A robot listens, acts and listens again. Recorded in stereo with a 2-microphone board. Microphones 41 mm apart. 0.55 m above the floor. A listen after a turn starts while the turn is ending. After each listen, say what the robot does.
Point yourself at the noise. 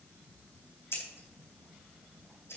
Turn 70° left.
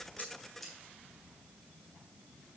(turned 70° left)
Facing the scissors, 2 to 4 m away.